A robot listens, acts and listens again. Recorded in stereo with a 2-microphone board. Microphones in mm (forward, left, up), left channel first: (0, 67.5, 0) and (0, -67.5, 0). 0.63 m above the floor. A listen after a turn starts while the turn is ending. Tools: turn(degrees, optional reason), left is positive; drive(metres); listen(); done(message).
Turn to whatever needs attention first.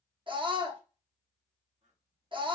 turn(degrees=-40, reason="The scream: about 40° right or 140° right.")
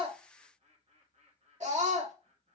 turn(degrees=-95, reason="So it is at 95° right.")
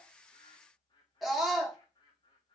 done("Facing the scream, 1 to 2 m away.")